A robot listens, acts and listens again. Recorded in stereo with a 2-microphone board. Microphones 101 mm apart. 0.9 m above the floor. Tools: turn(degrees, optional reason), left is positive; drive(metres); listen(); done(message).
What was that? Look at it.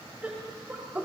turn(degrees=-25, reason="The laughter: about 25° right or 155° right.")
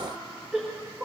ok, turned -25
turn(degrees=-20, reason="The laughter: about 20° right or 160° right.")
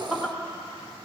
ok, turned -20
turn(degrees=-30)
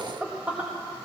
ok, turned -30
turn(degrees=-20, reason="The laughter: about 20° right or 160° right.")
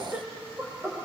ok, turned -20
turn(degrees=-20, reason="The laughter: about 20° right or 160° right.")
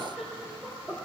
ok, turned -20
turn(degrees=-30)
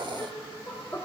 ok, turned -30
turn(degrees=20, reason="So it is at 20° left.")
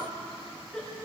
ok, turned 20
done("Found it: laughter, straight ahead.")